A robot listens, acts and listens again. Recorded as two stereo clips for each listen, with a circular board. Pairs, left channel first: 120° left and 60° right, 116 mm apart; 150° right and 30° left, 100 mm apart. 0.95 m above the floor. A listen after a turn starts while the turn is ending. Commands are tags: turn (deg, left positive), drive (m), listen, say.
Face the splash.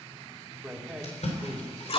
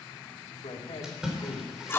<turn deg="115"/>
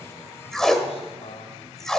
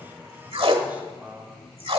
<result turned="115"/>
<say>Facing where the splash came from. I can't hear it now.</say>